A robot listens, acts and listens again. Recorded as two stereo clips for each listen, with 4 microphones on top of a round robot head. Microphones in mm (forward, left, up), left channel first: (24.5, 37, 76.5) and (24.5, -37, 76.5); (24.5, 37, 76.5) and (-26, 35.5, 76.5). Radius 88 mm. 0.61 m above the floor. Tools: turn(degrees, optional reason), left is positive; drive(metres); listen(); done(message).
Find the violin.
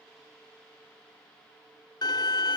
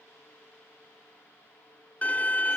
turn(degrees=65, reason="The violin: 65° left.")
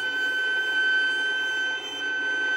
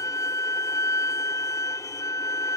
done("Found it: a violin, straight ahead.")